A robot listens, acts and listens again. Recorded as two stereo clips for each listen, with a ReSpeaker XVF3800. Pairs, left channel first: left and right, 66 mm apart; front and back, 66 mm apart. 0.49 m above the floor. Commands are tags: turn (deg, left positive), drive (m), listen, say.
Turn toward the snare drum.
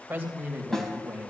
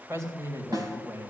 <turn deg="175"/>
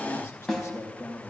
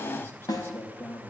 <say>Facing the snare drum.</say>